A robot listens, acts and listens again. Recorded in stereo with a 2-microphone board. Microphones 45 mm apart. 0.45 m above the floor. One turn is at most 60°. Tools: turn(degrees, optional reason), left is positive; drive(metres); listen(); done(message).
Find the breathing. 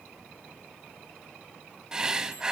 turn(degrees=-15, reason="The breathing: about 15° right or 165° right.")
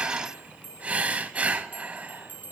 turn(degrees=-60, reason="So it is at 150° right.")
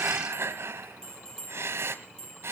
turn(degrees=-60, reason="The breathing is now 100° right.")
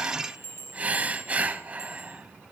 turn(degrees=-35, reason="The breathing is now 35° right.")
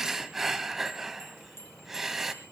turn(degrees=-10, reason="The breathing is now 10° right.")
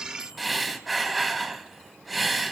done("Facing the breathing, 1 to 2 m away.")